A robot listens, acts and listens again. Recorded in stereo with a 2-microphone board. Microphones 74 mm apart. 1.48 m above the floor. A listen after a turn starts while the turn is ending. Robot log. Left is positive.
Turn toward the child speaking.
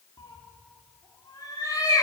cmd idle
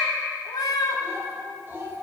note: The child speaking: about 25° right or 155° right.
cmd yaw -25
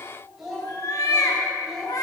end: Found it: a child speaking, straight ahead.